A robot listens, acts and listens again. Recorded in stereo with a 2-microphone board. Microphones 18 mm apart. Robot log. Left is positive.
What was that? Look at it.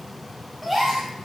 cmd yaw -30
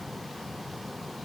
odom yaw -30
cmd idle
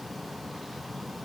end: I heard a gasp, but can't make it out now. It was about 25° left or 145° right.